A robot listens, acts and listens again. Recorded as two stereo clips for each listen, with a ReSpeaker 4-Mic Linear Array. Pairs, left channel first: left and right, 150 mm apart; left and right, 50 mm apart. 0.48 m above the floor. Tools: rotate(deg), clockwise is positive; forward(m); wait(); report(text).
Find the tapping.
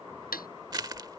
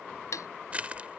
rotate(-90)
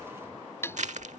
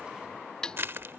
rotate(-15)
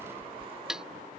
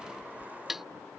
report("Found it: tapping, straight ahead.")